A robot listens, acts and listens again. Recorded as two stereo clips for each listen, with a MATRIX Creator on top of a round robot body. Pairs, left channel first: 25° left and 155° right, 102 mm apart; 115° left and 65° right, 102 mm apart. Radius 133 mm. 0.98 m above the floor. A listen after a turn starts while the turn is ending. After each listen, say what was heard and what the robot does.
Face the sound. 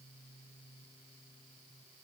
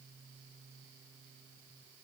Keep listening.
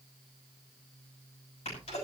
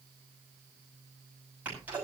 The sneeze: 10° left. Turn 10° left.
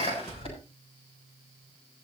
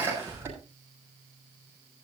Found it: a sneeze, straight ahead, over 4 m away.